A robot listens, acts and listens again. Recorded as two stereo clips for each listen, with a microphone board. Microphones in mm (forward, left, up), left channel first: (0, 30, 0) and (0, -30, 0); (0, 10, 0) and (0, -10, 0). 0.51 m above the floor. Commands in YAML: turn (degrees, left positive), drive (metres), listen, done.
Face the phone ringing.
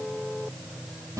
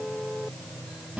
listen: true
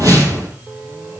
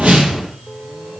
listen: true
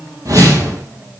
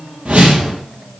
done: "I can't make out a phone ringing to turn to."